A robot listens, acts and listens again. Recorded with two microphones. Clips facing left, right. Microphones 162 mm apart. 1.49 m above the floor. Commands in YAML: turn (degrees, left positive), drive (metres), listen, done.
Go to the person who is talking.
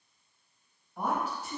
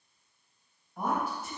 turn: 30
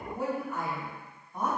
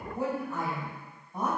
turn: -25
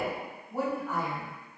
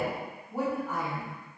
drive: 1.0
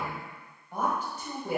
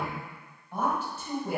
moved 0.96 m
turn: 15
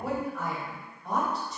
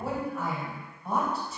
drive: 1.0
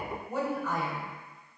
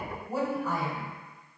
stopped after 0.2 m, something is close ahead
done: "Arrived at the woman speaking, straight ahead."